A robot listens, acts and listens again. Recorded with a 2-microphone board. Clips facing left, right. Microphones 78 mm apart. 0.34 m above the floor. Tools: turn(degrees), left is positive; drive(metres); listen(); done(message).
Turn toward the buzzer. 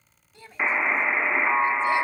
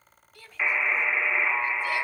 turn(degrees=25)
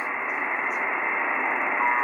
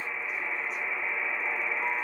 turn(degrees=125)
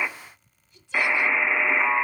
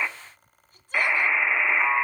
done("Found it: a buzzer, straight ahead.")